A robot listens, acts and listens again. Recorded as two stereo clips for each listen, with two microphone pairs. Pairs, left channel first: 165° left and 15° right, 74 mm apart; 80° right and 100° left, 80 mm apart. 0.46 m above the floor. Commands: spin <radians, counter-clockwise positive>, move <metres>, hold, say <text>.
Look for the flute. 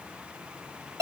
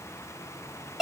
hold
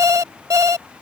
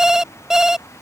hold
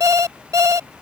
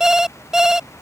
say I can't make out a flute to turn to.